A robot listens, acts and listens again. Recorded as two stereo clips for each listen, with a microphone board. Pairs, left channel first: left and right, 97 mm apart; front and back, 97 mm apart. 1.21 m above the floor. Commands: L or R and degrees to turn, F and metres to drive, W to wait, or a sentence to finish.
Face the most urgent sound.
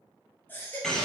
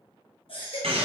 L20
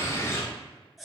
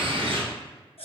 Facing the baby crying, 1 to 2 m away.